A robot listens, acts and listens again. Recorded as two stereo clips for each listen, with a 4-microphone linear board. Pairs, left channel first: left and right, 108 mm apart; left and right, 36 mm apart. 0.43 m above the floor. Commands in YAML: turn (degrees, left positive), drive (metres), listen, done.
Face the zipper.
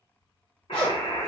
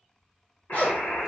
turn: 45
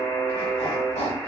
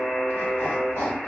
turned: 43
turn: 90
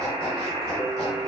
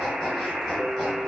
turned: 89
listen: true
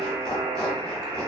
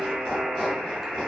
listen: true
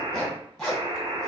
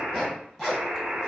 done: "Facing the zipper."